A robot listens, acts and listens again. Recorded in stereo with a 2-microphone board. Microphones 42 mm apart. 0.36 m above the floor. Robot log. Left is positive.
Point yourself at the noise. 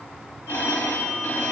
note: The phone ringing: about 60° left or 120° left.
cmd yaw +60
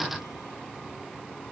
cmd idle
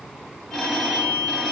note: So it is at 10° left.
cmd yaw +10
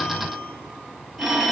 end: Facing the phone ringing, 1 to 2 m away.